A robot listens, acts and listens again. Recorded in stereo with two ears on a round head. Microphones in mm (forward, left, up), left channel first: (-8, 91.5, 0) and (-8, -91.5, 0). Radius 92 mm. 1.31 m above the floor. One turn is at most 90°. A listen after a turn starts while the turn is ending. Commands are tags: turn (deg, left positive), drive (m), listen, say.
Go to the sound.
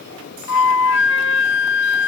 <turn deg="70"/>
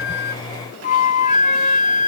<turn deg="35"/>
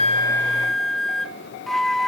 <drive m="1.0"/>
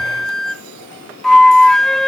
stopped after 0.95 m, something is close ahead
<say>Arrived at the flute, straight ahead.</say>